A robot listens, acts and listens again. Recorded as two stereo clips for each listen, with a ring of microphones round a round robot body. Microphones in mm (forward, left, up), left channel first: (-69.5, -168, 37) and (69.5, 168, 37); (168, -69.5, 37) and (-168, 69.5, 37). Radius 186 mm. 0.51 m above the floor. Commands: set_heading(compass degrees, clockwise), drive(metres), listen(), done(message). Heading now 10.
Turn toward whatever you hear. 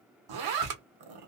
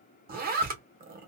set_heading(280)
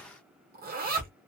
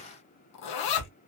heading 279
done("Facing the zipper, under 1 m away.")